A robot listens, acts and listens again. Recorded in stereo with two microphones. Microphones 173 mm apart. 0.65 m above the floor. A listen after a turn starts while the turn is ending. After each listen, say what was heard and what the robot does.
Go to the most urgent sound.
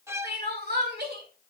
The crying: about 70° right or 110° right. Turn 70° right.
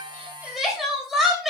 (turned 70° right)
Drive 1.0 m forward.
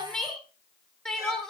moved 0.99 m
Drive 1.0 m forward.
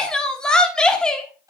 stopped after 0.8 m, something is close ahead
Arrived at the crying, straight ahead.